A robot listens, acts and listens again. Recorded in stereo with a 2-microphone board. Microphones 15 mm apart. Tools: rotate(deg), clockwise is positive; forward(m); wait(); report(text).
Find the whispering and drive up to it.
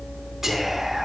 rotate(30)
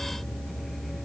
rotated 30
wait()
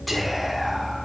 forward(1.0)
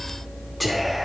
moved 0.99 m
forward(1.0)
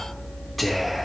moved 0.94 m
forward(1.0)
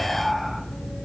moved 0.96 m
forward(1.0)
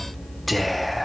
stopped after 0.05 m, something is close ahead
report("Arrived at the whispering, straight ahead.")